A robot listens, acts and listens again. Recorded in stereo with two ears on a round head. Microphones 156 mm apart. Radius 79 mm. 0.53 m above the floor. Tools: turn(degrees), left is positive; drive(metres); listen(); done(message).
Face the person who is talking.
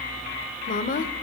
turn(degrees=50)
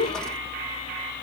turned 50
turn(degrees=70)
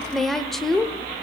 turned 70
done("Facing the woman speaking.")